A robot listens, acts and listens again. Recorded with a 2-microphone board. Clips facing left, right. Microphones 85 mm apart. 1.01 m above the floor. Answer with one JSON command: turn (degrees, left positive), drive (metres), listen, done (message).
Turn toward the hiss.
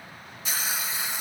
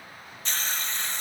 {"turn": 30}
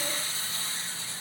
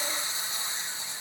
{"turn": -20}
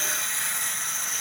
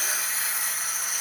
{"done": "Facing the hiss."}